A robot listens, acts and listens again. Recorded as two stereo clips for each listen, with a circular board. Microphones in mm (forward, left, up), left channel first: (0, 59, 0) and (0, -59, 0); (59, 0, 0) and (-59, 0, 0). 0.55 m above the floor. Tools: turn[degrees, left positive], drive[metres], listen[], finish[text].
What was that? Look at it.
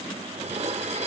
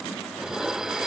Thought: The dishes clattering: 95° right.
Action: turn[-95]
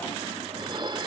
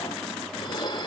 Thought: The dishes clattering is now 45° right.
Action: turn[-45]
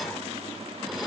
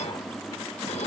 Action: listen[]
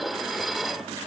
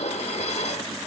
Action: finish[Found it: dishes clattering, straight ahead.]